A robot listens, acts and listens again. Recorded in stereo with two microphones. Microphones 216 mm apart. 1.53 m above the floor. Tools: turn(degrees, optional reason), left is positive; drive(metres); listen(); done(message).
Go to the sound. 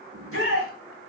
turn(degrees=-90)
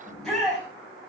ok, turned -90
drive(metres=1.0)
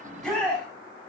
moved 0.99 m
drive(metres=1.0)
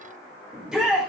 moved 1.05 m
drive(metres=1.0)
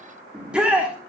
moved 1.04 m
drive(metres=1.0)
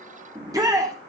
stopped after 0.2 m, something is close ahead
turn(degrees=-15, reason="The shout is now 15° right.")
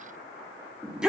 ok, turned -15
done("I am next to the shout.")